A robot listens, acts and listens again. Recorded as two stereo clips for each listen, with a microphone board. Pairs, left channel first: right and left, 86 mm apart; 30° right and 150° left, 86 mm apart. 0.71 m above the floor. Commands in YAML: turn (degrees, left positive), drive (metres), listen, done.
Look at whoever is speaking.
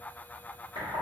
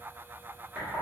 listen: true
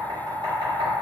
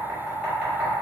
listen: true
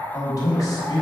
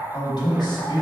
turn: -50
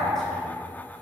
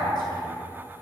listen: true
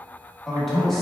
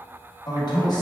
done: "Facing the man speaking, under 1 m away."